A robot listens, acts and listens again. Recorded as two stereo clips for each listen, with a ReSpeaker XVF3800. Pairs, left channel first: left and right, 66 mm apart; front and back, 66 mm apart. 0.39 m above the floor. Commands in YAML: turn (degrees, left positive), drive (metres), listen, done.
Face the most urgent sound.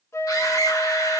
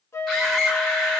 turn: 85
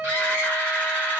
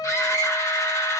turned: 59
turn: 30
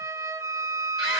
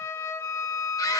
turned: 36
done: "Found it: a scream, straight ahead."